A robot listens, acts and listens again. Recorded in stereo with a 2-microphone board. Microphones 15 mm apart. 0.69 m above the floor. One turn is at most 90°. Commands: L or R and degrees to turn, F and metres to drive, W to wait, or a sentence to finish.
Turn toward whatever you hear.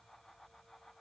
W
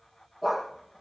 R30
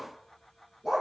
R90
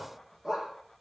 R40
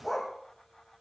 Found it: a dog barking, straight ahead, over 4 m away.